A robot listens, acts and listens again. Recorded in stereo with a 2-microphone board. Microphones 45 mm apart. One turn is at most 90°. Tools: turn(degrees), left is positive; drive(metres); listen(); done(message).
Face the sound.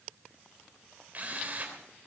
turn(degrees=-35)
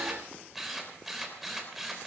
done("Found it: a drill, straight ahead.")